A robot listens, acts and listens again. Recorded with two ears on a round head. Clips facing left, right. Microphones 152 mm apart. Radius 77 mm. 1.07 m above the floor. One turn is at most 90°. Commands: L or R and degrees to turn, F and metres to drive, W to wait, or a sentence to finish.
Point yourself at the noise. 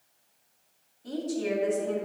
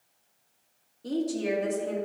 R70
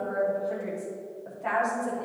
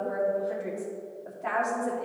Facing the woman speaking.